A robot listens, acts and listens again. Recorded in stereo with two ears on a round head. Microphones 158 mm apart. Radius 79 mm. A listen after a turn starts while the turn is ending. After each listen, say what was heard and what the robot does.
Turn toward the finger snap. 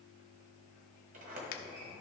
The finger snap: about 55° left or 125° left. Turn 55° left.
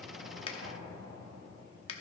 So it is at 40° left. Turn 40° left.
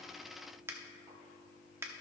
The finger snap is now 15° right. Turn 15° right.
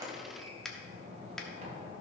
Found it: a finger snap, straight ahead.